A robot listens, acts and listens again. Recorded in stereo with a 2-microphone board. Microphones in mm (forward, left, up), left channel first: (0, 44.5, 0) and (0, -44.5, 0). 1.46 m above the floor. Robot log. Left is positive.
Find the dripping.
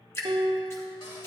note: The dripping: about 30° left or 150° left.
cmd yaw +30
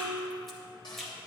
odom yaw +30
end: Found it: dripping, straight ahead.